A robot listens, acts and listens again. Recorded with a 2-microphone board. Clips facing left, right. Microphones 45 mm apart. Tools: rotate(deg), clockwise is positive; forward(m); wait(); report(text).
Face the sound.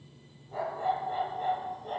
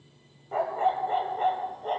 rotate(50)
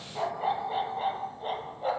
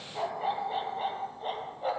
report("Facing the dog barking.")